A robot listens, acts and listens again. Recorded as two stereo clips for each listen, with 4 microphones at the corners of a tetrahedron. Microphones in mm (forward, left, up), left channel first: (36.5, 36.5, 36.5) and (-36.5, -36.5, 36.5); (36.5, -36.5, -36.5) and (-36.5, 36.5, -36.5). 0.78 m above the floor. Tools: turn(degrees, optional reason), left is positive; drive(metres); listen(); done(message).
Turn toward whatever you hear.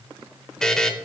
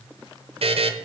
turn(degrees=130, reason="The buzzer: 130° left.")
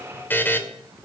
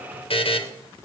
turn(degrees=-25, reason="The buzzer is now 25° right.")
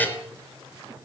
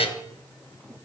turn(degrees=-25, reason="The buzzer is now 25° right.")
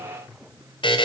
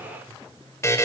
turn(degrees=15, reason="The buzzer is now 15° left.")
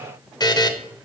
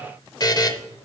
done("Found it: a buzzer, straight ahead, under 1 m away.")